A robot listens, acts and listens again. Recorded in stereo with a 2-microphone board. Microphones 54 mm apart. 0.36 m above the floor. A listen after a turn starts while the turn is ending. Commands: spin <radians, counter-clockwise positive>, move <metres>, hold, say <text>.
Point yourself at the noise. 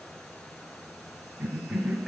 spin 0.52
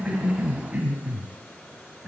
spin -0.52
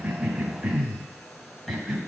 say Facing the cough, 1 to 2 m away.